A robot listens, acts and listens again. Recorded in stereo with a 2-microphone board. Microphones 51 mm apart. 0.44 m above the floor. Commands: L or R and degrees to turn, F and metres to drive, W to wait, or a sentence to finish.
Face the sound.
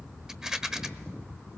R30
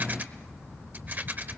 R140
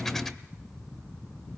W
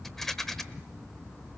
L10
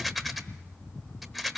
Found it: a rattle, straight ahead, 1 to 2 m away.